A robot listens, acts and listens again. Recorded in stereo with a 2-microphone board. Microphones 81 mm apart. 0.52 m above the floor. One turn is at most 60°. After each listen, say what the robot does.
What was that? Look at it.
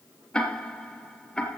Turn 30° left.
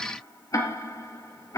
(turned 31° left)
Turn 60° left.
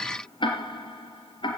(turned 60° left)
Turn 60° left.
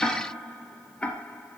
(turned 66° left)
Turn 15° left.
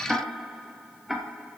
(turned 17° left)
Found it: ticking, straight ahead, 2 to 4 m away.